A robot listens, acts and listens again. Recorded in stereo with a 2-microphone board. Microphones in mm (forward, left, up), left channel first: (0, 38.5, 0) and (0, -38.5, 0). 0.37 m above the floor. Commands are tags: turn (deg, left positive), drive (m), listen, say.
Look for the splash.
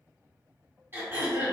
<listen/>
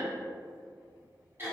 <listen/>
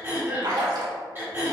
<turn deg="-90"/>
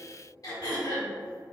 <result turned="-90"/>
<say>Facing where the splash came from. I can't hear it now.</say>